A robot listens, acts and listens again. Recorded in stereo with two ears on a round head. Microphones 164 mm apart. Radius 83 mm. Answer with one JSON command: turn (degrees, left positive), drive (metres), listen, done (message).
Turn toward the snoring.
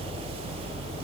{"listen": true}
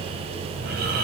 {"turn": -55}
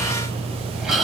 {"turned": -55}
{"done": "Facing the snoring, over 4 m away."}